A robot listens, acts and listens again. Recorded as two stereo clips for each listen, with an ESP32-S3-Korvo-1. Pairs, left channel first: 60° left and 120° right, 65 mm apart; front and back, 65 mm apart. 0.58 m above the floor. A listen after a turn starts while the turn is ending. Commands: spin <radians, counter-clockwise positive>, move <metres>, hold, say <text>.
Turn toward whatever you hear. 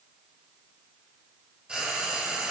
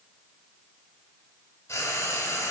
spin -0.79
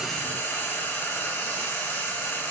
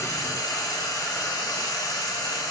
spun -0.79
say Found it: frying, straight ahead, under 1 m away.